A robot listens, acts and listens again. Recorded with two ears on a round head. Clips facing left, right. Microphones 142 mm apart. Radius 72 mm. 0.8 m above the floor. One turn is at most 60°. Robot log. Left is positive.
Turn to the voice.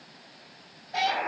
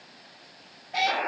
cmd idle
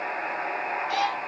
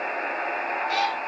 cmd idle
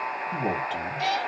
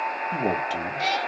note: The man speaking: about 50° right or 130° right.
cmd yaw -50
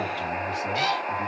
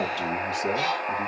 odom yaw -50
note: So it is at 50° right.
cmd yaw -50
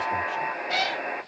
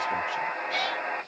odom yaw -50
cmd idle
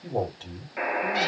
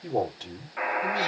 note: The man speaking is now 15° right.
cmd yaw -15
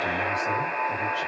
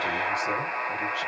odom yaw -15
cmd idle
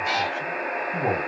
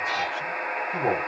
end: Facing the man speaking, 2 to 4 m away.